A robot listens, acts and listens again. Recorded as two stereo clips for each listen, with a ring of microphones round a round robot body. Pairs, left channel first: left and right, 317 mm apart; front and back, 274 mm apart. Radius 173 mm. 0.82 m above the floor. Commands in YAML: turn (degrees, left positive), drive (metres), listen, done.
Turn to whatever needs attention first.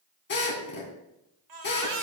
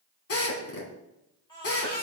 turn: -75
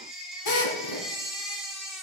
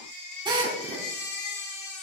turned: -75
done: "Facing the baby crying."